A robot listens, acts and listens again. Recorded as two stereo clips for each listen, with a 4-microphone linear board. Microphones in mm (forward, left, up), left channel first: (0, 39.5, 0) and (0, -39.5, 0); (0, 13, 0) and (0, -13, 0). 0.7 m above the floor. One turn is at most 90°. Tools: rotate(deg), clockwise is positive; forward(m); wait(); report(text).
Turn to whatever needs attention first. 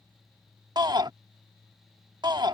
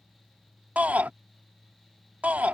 rotate(60)
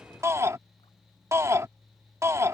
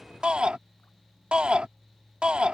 rotate(40)
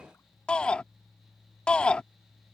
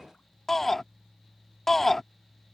rotate(-15)
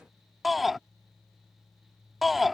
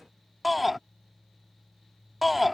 report("Found it: a shout, straight ahead.")